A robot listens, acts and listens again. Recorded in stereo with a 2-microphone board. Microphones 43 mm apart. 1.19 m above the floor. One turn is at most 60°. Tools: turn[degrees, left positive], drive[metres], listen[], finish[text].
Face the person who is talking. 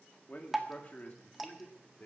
Thought: The man speaking: about 35° left or 145° left.
Action: turn[35]
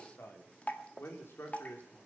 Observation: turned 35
Thought: So it is at 105° left.
Action: turn[60]
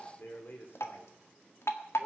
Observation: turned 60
Thought: The man speaking is now 55° left.
Action: turn[55]
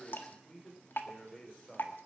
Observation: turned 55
Thought: The man speaking is now 15° left.
Action: turn[15]
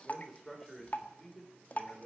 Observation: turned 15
Action: finish[Found it: a man speaking, straight ahead, over 4 m away.]